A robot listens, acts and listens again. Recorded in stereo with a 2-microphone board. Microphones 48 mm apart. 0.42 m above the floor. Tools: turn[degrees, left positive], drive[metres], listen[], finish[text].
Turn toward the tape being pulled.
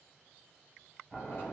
Action: listen[]
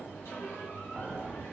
Action: listen[]
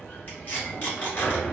Thought: The tape being pulled: about 40° left or 140° left.
Action: turn[40]
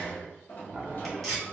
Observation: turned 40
Action: finish[Found it: tape being pulled, straight ahead.]